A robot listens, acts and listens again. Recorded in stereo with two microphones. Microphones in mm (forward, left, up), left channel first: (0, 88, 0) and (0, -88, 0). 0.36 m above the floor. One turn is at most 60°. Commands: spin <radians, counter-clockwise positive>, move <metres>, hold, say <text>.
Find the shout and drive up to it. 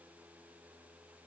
hold
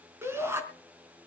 spin -0.52
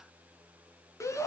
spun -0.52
spin 0.26
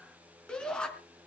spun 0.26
move 1.0
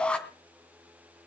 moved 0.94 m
move 1.0
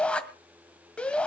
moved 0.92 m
move 1.0
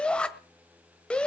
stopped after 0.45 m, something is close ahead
say I am next to the shout.